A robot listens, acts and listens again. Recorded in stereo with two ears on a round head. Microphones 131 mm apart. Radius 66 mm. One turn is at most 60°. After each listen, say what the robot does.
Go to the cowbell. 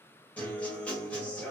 Keep listening.
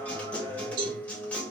Turn 60° right.
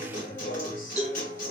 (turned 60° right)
Drive 1.0 m forward.
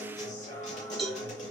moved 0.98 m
Drive 1.0 m forward.
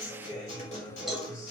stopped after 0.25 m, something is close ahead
I am next to the cowbell.